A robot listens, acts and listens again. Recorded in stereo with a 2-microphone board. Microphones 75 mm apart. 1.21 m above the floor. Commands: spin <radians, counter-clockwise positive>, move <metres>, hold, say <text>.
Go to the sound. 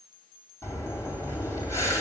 spin 0.79
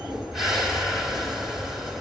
move 1.0
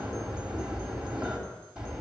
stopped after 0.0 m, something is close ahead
spin -0.17
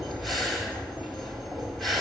say Something is in my way. I am facing the breathing but have not reached it.